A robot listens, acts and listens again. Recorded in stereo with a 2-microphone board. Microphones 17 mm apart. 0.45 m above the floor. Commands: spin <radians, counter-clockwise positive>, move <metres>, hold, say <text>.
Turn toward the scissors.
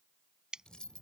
spin -1.05
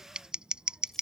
spin -1.05
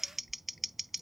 say Facing the scissors.